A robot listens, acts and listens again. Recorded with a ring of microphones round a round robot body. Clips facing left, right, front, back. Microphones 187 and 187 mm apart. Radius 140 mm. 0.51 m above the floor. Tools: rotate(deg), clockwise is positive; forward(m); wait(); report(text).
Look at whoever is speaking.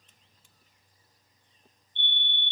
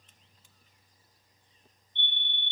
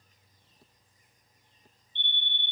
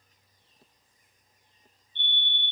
wait()
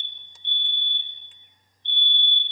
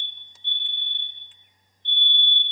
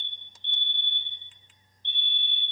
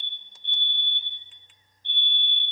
wait()
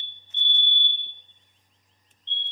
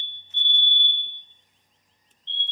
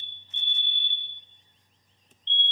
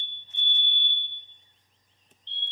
report("I can't make out anyone speaking to turn to.")